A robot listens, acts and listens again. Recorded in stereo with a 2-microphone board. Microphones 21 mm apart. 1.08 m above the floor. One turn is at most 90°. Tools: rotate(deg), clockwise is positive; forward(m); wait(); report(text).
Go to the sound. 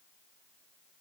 wait()
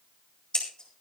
rotate(-40)
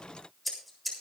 forward(1.0)
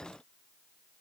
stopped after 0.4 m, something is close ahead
wait()
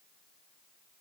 wait()
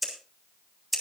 report("Something is in my way. I am facing the scissors but have not reached it.")